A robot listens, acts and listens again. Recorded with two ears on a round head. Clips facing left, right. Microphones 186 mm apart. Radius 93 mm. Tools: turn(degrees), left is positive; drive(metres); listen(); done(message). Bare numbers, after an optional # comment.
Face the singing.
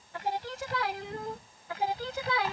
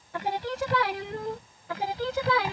# The singing: about 65° right or 115° right.
turn(-65)
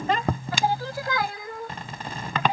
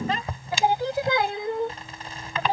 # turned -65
# So it is at 30° right.
turn(-30)
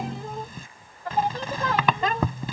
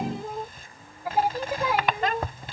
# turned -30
# The singing is now 10° right.
turn(-10)
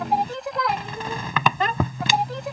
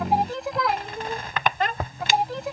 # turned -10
done("Facing the singing.")